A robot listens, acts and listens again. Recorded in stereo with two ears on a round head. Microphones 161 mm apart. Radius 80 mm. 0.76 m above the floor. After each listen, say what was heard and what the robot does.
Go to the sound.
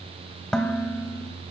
Turn 30° left.
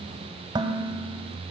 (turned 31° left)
So it is at 25° right. Turn 25° right.
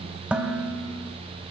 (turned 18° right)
The dishes clattering is now 10° right. Turn 10° right.
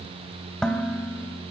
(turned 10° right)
Drive 1.0 m forward.
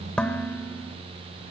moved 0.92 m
Drive 1.0 m forward.
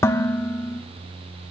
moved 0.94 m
The dishes clattering is now 15° left. Turn 15° left.
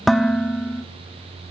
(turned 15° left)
Drive 1.0 m forward.
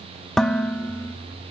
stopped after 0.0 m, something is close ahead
Arrived at the dishes clattering, straight ahead.